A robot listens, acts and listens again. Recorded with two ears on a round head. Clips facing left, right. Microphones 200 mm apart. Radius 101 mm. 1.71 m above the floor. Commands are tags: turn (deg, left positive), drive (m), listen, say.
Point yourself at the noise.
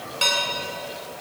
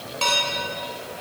<turn deg="20"/>
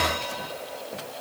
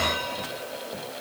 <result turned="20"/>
<listen/>
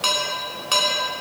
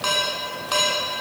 <turn deg="140"/>
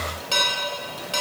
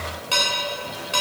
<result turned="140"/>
<say>Facing the dishes clattering, 2 to 4 m away.</say>